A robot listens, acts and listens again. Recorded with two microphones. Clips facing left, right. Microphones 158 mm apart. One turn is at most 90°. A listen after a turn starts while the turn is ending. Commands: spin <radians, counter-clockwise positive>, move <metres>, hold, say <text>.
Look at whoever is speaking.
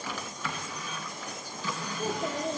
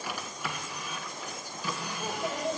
spin 0.70
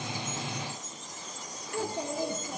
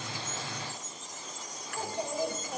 spin 1.57
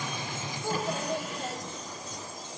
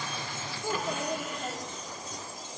spin -0.17
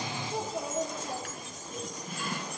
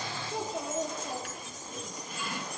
say Facing the child speaking.